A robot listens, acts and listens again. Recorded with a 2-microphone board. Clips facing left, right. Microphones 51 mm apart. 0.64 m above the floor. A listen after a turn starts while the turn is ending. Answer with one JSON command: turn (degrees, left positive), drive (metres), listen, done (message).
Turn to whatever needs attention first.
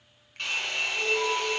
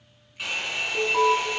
{"turn": -60}
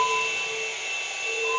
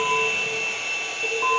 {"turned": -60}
{"turn": -65}
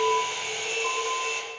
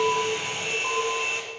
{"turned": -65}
{"done": "Found it: an alarm, straight ahead."}